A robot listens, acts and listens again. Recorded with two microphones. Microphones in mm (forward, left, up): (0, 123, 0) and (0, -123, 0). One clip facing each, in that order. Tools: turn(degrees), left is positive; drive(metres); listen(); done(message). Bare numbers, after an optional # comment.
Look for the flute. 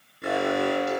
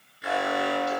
listen()
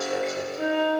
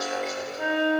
# The flute: about 45° left or 135° left.
turn(45)
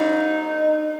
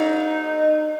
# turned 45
done("Facing the flute, 2 to 4 m away.")